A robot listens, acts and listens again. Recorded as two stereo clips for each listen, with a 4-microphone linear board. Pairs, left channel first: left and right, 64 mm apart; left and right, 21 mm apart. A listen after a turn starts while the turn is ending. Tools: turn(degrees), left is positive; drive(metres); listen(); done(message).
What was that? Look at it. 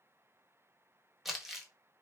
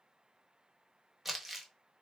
turn(degrees=-30)
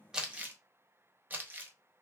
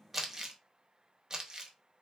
turn(degrees=-150)
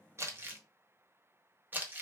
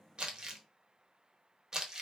turn(degrees=-35)
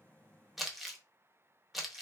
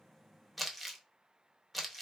done("Found it: crumpling, straight ahead, under 1 m away.")